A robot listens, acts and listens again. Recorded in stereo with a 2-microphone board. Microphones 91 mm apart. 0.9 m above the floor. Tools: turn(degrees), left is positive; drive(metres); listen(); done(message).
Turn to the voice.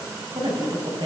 turn(degrees=-60)
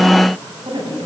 turn(degrees=-60)
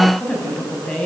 turn(degrees=10)
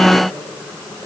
listen()
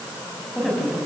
done("Facing the woman speaking, over 4 m away.")